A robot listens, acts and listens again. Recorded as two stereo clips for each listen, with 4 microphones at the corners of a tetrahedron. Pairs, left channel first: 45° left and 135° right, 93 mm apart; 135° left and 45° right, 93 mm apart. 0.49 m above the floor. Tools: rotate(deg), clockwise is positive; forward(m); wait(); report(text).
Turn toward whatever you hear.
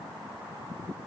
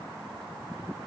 wait()
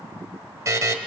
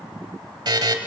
rotate(80)
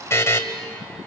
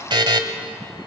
rotate(15)
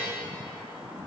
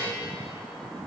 wait()
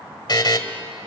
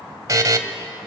report("Facing the buzzer, 1 to 2 m away.")